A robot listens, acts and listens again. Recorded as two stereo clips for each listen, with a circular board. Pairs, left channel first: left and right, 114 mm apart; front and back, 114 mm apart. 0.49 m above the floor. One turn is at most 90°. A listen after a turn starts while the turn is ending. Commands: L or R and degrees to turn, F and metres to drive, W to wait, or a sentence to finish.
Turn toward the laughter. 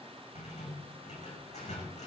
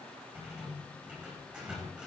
W
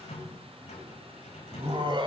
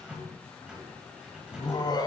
R50
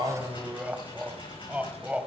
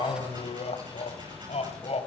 R10
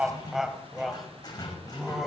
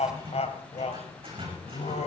Found it: laughter, straight ahead.